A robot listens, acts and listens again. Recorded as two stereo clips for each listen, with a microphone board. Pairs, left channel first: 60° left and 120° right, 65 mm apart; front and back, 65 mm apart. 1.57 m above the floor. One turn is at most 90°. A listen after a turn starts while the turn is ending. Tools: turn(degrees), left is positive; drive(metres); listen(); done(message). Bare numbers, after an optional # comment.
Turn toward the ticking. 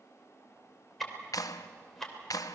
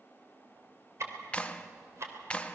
# The ticking: 145° left.
turn(90)
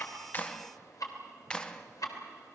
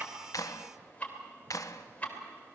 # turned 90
# The ticking is now 65° left.
turn(65)
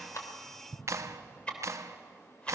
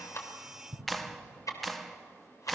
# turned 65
# The ticking is now 10° right.
turn(-10)
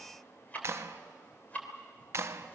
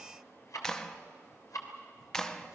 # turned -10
done("Found it: ticking, straight ahead.")